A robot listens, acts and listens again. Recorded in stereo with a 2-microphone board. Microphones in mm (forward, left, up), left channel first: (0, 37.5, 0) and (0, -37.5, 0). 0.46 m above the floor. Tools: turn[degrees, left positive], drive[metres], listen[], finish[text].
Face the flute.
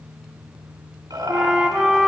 Action: turn[-30]
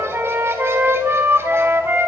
Thought: So it is at 145° right.
Action: turn[-145]
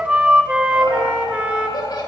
Thought: The flute is now 15° right.
Action: turn[-15]
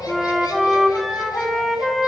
Action: finish[Facing the flute, 1 to 2 m away.]